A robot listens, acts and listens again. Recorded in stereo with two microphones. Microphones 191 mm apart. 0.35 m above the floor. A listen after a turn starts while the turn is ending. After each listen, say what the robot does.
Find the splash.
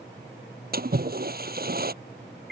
Turn 55° right.
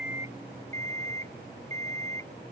Keep listening.
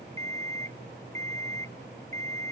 I heard a splash, but can't make it out now. It was about straight ahead or 70° right.